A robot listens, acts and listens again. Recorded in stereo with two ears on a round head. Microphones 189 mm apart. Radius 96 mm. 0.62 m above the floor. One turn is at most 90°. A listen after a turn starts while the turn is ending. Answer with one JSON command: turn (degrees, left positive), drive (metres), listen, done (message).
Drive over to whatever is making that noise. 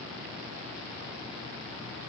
{"listen": true}
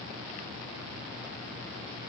{"listen": true}
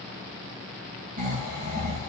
{"turn": -35}
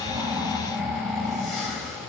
{"drive": 1.0}
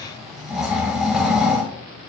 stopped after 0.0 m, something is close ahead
{"done": "Blocked. The snoring is further on, straight ahead."}